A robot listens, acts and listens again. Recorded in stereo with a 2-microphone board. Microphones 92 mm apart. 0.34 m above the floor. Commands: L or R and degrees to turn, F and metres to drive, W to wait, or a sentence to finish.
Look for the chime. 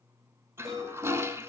R40
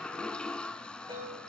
R100
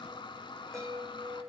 L10
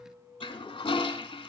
Found it: a chime, straight ahead, over 4 m away.